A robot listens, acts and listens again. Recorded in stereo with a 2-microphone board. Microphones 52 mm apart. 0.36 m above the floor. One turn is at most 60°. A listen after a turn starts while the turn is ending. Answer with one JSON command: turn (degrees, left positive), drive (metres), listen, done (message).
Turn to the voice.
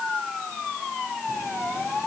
{"listen": true}
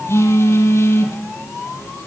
{"listen": true}
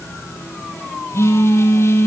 {"done": "I can't make out anyone speaking to turn to."}